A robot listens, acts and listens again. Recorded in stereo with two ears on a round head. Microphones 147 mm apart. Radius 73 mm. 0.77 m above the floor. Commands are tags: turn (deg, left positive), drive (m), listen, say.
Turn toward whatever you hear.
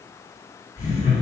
<turn deg="55"/>
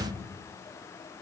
<listen/>
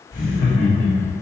<turn deg="60"/>
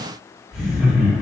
<say>Found it: laughter, straight ahead, 1 to 2 m away.</say>